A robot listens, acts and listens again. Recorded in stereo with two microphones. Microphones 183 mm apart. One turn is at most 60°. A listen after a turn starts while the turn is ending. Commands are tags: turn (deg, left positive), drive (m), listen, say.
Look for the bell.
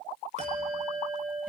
<turn deg="-40"/>
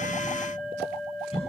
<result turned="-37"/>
<say>Found it: a bell, straight ahead, 2 to 4 m away.</say>